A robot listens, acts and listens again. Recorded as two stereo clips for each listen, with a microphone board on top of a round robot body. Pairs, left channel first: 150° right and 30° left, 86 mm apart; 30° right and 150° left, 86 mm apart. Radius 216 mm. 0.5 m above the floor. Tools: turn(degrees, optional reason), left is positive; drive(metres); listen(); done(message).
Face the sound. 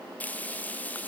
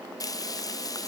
turn(degrees=-75, reason="The frying: 75° right.")
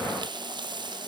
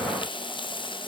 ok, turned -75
done("Facing the frying.")